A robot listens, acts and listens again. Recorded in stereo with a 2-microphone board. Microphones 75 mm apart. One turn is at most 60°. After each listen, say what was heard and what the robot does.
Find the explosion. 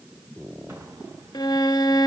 The explosion: about 40° right or 140° right. Turn 40° right.
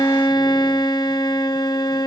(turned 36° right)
Keep listening.
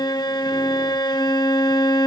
I heard an explosion, but can't make it out now. It was about 5° right or 105° right.